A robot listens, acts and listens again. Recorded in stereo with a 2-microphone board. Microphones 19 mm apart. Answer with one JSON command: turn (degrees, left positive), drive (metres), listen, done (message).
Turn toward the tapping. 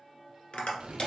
{"turn": 70}
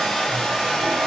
{"listen": true}
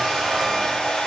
{"listen": true}
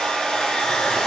{"done": "I heard tapping, but can't make it out now. It was about straight ahead or 40° left."}